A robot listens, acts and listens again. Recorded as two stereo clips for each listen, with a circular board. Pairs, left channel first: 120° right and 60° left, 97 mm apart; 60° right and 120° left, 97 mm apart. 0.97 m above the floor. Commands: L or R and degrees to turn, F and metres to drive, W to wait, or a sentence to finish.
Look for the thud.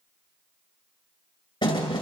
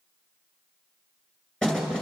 R140
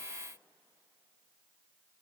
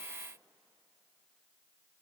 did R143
Facing where the thud came from. I can't hear it now.